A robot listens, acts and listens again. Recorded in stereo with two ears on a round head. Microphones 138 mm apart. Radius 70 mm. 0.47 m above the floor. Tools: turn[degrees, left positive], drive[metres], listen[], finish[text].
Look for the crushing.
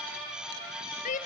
Action: listen[]
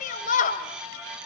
Action: listen[]
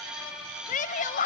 Action: finish[I can't make out crushing to turn to.]